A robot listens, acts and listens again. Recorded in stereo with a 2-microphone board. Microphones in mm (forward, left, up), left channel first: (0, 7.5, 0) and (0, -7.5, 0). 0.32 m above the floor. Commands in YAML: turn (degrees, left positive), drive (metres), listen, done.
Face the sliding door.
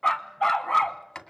turn: 55
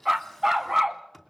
turn: 10
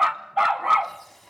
done: "Facing the sliding door, 2 to 4 m away."